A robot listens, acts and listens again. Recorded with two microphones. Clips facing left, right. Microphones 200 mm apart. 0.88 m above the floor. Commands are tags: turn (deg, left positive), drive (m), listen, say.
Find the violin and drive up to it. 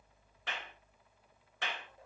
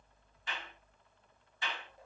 <listen/>
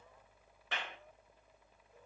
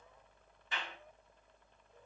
<listen/>
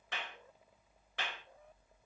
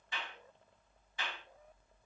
<say>I can't make out a violin to turn to.</say>